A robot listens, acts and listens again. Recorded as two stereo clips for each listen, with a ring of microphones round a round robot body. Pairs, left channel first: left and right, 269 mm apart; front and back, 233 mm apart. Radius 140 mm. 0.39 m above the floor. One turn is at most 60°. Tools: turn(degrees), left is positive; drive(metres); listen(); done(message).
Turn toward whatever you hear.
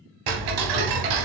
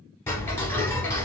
turn(degrees=-60)
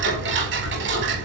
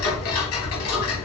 turn(degrees=-40)
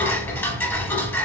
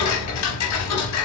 done("Facing the ticking, under 1 m away.")